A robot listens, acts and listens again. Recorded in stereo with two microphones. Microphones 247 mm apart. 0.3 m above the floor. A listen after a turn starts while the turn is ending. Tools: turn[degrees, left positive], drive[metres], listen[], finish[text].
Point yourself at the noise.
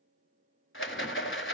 Thought: The rattle: about 50° left or 130° left.
Action: turn[50]
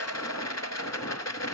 Thought: So it is at 80° left.
Action: turn[80]
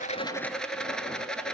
Action: finish[Found it: a rattle, straight ahead, under 1 m away.]